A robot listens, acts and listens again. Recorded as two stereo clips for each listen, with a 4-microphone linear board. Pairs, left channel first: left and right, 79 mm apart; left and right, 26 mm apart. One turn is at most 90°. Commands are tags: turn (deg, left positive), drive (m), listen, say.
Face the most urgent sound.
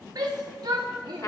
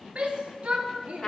<turn deg="-60"/>
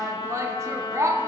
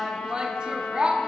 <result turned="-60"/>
<turn deg="-45"/>
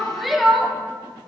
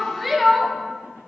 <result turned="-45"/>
<say>Facing the shout, under 1 m away.</say>